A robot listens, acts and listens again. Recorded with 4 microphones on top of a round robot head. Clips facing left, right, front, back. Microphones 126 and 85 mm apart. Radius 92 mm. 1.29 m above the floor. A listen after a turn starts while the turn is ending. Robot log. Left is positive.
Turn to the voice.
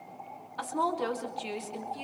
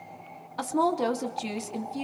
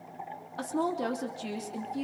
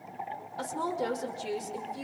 note: The woman speaking: 40° right.
cmd yaw -40
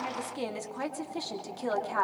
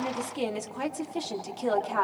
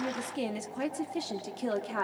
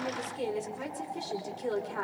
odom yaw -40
note: The woman speaking is now 10° right.
cmd yaw -10
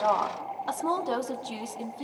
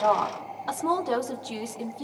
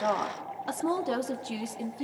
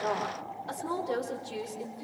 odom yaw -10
end: Found it: a woman speaking, straight ahead.